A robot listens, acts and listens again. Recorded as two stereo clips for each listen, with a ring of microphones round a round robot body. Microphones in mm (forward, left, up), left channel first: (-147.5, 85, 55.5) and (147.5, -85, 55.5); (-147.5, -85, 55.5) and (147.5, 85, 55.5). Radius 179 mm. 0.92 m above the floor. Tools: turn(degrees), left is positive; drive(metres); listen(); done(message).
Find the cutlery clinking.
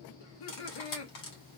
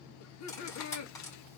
turn(degrees=130)
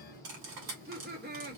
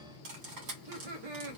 done("Facing the cutlery clinking, 2 to 4 m away.")